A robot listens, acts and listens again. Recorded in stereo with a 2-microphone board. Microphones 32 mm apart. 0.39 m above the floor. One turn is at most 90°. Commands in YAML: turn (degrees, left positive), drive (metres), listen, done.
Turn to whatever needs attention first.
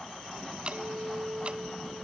listen: true
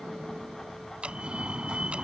turn: -30
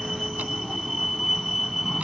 done: "Found it: a fire alarm, straight ahead."